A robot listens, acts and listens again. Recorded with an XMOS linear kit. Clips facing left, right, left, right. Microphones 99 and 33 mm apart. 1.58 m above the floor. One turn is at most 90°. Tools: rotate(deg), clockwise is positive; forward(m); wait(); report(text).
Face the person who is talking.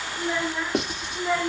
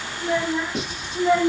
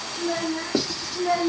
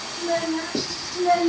rotate(25)
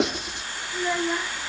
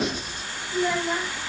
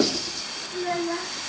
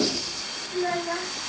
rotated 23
rotate(40)
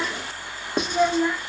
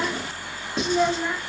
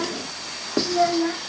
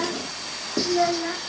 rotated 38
report("Facing the child speaking.")